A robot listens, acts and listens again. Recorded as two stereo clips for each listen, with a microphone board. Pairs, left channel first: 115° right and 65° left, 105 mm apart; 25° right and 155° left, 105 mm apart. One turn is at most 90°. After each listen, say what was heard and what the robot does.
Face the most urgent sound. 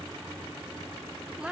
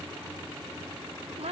Keep listening.
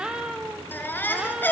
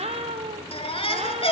The baby crying: 40° right. Turn 40° right.
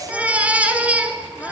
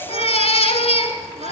The baby crying is now 10° right. Turn 10° right.
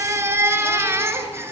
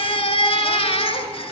Facing the baby crying.